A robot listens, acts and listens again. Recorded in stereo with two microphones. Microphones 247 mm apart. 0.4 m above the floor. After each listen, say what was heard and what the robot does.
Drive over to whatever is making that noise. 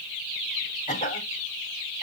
The cough: about 30° left or 150° left. Turn 30° left.
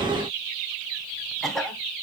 Drive 1.0 m forward.
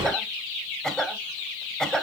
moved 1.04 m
Drive 1.0 m forward.
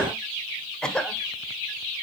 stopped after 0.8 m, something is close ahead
Arrived at the cough, straight ahead.